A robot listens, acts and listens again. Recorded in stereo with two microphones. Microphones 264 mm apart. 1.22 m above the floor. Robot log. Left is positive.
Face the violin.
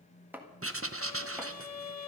cmd yaw +90
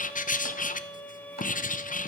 end: Found it: a violin, straight ahead, 1 to 2 m away.